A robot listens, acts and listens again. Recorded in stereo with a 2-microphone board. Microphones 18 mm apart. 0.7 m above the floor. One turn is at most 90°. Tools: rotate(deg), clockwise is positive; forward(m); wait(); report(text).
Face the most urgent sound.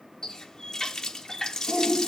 rotate(45)
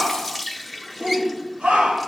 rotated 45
rotate(90)
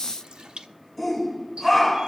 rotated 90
rotate(10)
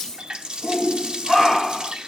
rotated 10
report("Facing the shout.")